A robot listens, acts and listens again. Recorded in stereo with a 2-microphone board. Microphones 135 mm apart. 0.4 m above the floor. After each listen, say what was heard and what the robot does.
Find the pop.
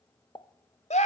The pop: about 35° left or 145° left. Turn 35° left.
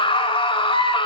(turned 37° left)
Keep listening.
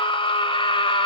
I heard a pop, but can't make it out now. It was about 5° right or 110° left.